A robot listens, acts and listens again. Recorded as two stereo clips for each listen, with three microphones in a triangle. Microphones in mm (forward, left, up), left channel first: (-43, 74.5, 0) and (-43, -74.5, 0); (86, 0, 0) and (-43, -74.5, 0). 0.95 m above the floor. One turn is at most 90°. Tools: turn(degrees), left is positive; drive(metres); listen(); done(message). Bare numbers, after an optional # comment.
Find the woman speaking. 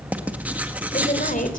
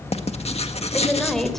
# The woman speaking: 115° left.
turn(90)
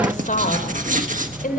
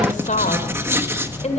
# The woman speaking is now 70° left.
turn(70)
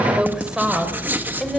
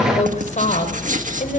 done("Facing the woman speaking, 2 to 4 m away.")